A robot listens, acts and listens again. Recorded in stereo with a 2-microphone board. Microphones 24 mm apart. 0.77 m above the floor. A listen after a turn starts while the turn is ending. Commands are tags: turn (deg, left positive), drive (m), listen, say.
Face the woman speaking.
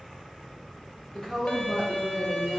<turn deg="25"/>
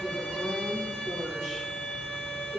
<turn deg="-10"/>
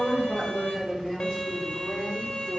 <say>Facing the woman speaking.</say>